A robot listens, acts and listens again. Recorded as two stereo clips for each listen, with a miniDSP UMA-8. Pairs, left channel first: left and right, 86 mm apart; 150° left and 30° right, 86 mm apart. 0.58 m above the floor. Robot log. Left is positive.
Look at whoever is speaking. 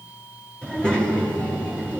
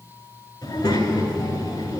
note: The child speaking: 170° left.
cmd yaw +170
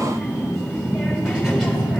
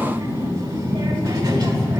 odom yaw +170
end: Found it: a child speaking, straight ahead.